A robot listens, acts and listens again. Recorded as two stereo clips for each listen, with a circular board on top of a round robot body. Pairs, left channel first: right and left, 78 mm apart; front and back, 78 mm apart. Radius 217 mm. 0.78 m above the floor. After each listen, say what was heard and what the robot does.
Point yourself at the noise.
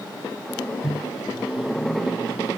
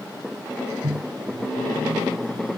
The microwave: 170° left. Turn 170° left.
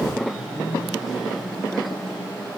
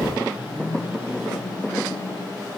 Keep listening.
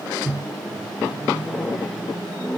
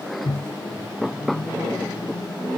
Facing the microwave.